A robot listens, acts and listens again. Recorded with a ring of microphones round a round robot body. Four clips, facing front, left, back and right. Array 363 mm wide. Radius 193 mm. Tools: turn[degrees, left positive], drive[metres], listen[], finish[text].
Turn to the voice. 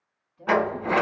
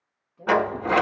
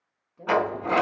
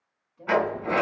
Thought: The woman speaking: 155° left.
Action: turn[155]
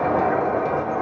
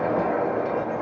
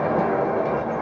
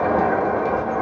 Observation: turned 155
Action: listen[]
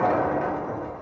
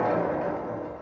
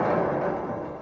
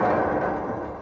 Action: listen[]
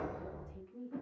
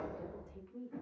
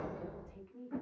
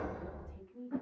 Thought: The woman speaking is now 75° left.
Action: turn[75]
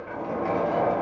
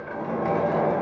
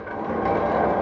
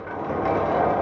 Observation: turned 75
Action: listen[]
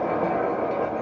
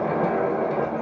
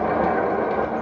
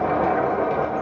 Action: listen[]
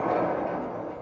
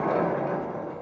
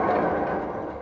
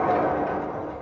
Action: finish[Facing where the woman speaking came from. I can't hear it now.]